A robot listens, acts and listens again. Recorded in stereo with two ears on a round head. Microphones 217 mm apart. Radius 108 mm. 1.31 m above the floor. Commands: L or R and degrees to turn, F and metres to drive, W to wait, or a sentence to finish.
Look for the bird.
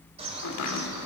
R25
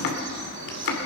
R130
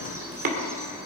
W
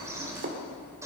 R15
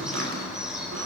Found it: a bird, straight ahead, 2 to 4 m away.